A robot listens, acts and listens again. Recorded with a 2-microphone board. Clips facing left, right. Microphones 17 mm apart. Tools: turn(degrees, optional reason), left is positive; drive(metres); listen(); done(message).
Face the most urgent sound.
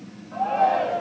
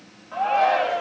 turn(degrees=-35, reason="The shout: about 35° right or 145° right.")
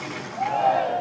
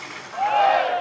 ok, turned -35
turn(degrees=-100, reason="So it is at 100° right.")
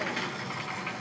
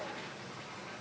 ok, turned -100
listen()
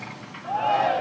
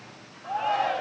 done("Found it: a shout, straight ahead.")